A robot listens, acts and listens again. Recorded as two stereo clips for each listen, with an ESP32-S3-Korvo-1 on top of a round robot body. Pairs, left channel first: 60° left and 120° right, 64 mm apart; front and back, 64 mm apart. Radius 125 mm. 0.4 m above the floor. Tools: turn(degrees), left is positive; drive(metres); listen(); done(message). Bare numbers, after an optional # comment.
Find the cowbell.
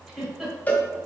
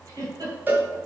# The cowbell: 125° left.
turn(125)
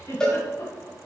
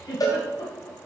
# The cowbell is now 20° right.
turn(-20)
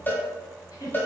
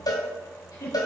done("Found it: a cowbell, straight ahead, 1 to 2 m away.")